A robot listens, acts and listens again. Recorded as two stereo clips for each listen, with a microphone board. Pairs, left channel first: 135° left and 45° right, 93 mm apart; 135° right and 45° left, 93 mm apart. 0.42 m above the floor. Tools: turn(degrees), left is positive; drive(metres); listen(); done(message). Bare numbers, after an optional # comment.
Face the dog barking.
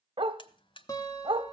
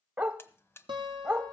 # The dog barking: 25° right.
turn(-25)
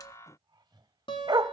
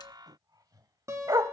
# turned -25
done("Found it: a dog barking, straight ahead, 1 to 2 m away.")